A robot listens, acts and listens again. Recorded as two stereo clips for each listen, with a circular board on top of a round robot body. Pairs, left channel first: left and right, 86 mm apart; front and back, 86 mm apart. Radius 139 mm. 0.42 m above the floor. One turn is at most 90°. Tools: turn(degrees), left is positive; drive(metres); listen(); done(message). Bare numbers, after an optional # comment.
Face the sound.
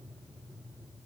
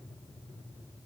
listen()
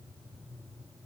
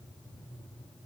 listen()
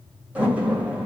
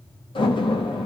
# The door slam: 15° right.
turn(-15)
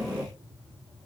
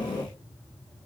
done("Facing the door slam, 2 to 4 m away.")